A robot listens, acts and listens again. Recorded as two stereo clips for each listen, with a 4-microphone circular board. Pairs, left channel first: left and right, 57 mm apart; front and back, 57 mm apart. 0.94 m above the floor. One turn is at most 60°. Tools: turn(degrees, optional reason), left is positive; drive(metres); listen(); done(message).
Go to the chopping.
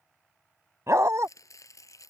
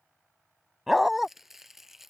turn(degrees=60, reason="The chopping: 95° left.")
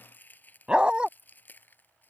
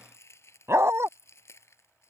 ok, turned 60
turn(degrees=35, reason="The chopping is now 35° left.")
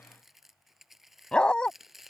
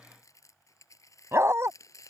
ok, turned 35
drive(metres=1.0)
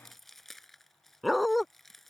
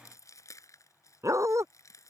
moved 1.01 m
drive(metres=1.0)
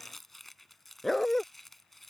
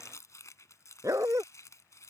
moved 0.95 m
drive(metres=1.0)
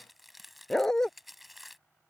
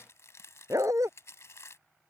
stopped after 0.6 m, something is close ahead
done("I am next to the chopping.")